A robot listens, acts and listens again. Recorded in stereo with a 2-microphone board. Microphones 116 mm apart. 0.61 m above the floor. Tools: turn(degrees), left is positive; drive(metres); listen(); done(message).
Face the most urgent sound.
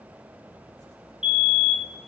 turn(degrees=45)
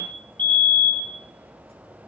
turn(degrees=15)
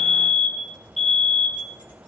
done("Found it: a fire alarm, straight ahead.")